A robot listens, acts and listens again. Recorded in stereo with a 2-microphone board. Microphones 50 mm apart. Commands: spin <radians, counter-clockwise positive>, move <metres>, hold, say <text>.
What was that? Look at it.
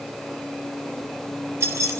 spin -1.22
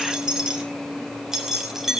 spin -0.17
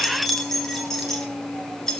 spin 0.17
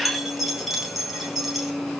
say Facing the keys jangling.